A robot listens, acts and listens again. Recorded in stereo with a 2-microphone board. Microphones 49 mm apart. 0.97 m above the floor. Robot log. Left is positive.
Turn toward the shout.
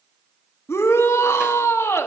cmd yaw +90
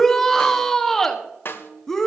note: So it is at 15° left.
cmd yaw +15
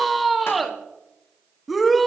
end: Facing the shout.